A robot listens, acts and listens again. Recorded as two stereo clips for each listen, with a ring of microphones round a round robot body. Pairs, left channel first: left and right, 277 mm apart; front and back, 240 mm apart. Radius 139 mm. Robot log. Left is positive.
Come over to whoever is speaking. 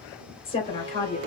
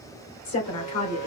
note: The woman speaking: 20° left.
cmd yaw +20
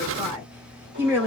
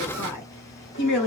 cmd fwd 1.0
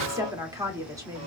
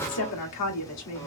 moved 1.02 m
note: The woman speaking is now 10° right.
cmd yaw -10
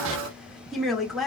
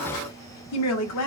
cmd fwd 1.0
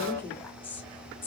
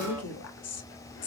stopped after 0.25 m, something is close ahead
end: Arrived at the woman speaking, straight ahead.